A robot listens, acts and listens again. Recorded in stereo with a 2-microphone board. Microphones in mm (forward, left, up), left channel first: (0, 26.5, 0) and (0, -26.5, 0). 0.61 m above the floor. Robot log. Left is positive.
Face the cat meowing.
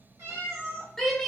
cmd yaw -90
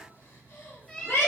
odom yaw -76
note: So it is at 10° left.
cmd yaw +10
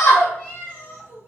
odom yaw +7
note: The cat meowing is now 35° left.
cmd yaw +35
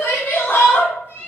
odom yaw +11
note: The cat meowing is now 45° left.
cmd yaw +45
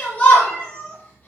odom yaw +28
note: The cat meowing is now 25° left.
cmd yaw +25
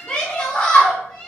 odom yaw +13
note: The cat meowing is now 15° left.
cmd yaw +15
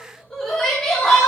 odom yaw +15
cmd idle
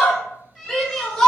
end: Facing the cat meowing.